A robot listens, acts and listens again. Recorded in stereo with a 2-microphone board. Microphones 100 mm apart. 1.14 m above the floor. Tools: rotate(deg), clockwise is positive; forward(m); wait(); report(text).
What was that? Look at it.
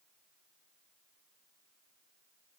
wait()
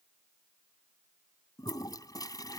rotate(-40)
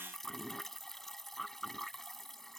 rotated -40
report("Found it: a toilet flushing, straight ahead.")